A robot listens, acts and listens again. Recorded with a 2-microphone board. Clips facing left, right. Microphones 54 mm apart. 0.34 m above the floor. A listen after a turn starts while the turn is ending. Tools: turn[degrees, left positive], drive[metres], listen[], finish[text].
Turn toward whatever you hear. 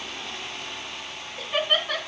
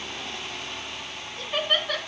Action: turn[30]
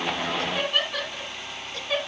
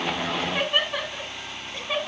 Thought: So it is at 15° right.
Action: turn[-15]
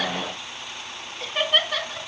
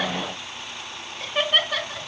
Action: finish[Found it: laughter, straight ahead.]